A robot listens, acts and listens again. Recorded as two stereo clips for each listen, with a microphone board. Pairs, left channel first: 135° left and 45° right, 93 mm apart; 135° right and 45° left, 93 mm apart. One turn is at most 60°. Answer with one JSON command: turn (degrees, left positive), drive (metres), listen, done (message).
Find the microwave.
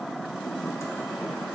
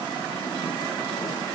{"listen": true}
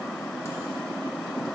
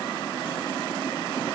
{"listen": true}
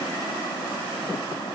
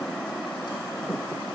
{"done": "I can't make out a microwave."}